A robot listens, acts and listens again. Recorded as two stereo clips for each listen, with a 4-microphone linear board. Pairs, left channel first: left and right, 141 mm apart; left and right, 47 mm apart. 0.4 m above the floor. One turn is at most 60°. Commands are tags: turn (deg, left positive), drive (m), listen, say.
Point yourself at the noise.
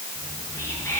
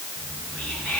<turn deg="20"/>
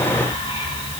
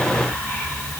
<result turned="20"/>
<turn deg="60"/>
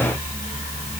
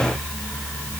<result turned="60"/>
<turn deg="60"/>
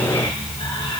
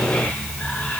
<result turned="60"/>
<turn deg="35"/>
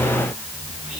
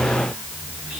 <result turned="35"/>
<say>Found it: whispering, straight ahead, 2 to 4 m away.</say>